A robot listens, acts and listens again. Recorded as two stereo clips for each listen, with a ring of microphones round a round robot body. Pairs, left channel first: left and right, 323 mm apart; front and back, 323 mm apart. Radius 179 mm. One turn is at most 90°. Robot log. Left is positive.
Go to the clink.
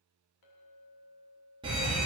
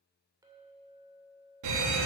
note: The clink: 100° left.
cmd yaw +90
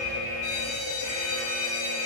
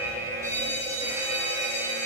note: Nothing new. It was at 10° left.
cmd yaw +10
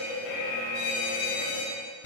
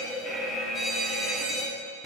cmd idle
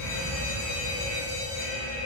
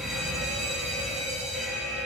end: I heard a clink from this way, but can't make it out now. I did not reach it.